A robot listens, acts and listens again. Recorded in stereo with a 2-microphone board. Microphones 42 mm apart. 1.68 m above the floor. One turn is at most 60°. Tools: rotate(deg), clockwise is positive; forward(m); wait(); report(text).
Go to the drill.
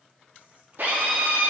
rotate(60)
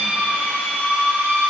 rotate(50)
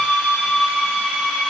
rotate(20)
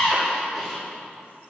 forward(1.0)
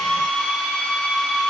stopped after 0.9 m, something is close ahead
report("Arrived at the drill, straight ahead.")